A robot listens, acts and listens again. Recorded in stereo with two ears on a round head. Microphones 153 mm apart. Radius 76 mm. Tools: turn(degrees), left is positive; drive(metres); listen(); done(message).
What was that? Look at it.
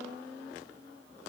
listen()
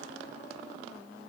listen()
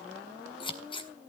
turn(degrees=30)
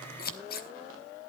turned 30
turn(degrees=120)
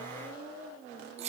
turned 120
turn(degrees=-40)
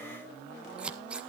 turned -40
done("Found it: scissors, straight ahead.")